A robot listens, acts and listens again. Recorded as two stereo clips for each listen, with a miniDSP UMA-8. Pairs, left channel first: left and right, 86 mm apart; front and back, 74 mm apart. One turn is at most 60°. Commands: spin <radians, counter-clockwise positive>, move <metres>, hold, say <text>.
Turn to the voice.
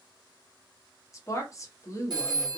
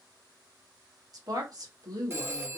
spin 1.05
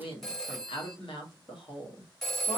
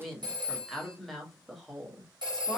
spin 1.05
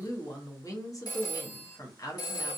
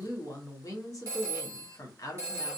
spin 0.70
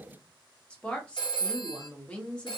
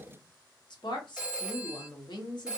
spin 0.26
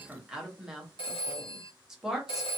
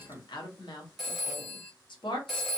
say Found it: a woman speaking, straight ahead, 1 to 2 m away.